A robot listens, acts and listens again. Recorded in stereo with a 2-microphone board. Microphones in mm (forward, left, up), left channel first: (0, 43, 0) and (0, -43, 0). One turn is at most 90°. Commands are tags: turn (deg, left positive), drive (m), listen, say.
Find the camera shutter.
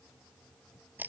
<listen/>
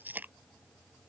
<listen/>
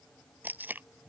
<say>I can't make out a camera shutter to turn to.</say>